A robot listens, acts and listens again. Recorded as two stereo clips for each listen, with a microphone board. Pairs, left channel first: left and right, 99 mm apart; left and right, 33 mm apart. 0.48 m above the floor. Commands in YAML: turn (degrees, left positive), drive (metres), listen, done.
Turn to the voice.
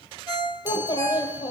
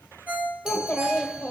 turn: 45
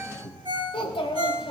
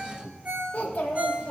turn: 80
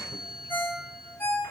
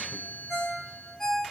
listen: true
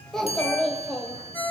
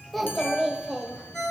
done: "Found it: a child speaking, straight ahead."